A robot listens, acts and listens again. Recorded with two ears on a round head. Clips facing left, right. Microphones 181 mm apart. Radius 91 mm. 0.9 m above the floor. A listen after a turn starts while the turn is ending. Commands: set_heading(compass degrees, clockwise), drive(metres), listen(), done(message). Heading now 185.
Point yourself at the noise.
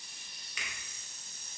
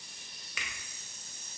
set_heading(235)
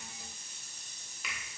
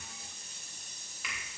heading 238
done("Facing the finger snap.")